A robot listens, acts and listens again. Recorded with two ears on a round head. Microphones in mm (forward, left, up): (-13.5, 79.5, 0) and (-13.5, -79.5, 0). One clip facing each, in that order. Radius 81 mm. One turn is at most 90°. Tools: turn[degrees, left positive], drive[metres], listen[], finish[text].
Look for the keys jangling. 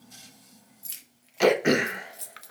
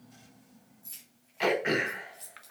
Thought: The keys jangling: about 70° left or 110° left.
Action: turn[70]
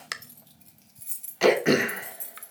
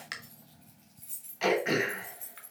Thought: So it is at 60° left.
Action: turn[60]
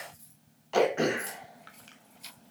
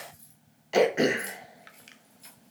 Action: finish[Facing the keys jangling.]